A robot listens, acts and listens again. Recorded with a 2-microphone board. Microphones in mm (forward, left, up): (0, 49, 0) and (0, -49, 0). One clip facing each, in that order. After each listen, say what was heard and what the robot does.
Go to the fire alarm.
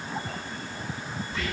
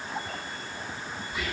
Keep listening.
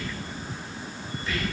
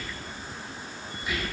Keep listening.
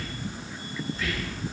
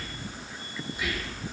I can't make out a fire alarm to turn to.